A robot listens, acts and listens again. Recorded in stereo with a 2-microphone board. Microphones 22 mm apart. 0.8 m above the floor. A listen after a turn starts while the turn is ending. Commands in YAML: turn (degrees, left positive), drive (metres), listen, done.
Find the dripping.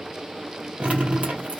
turn: -75
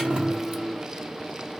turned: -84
listen: true
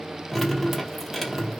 done: "Found it: dripping, straight ahead."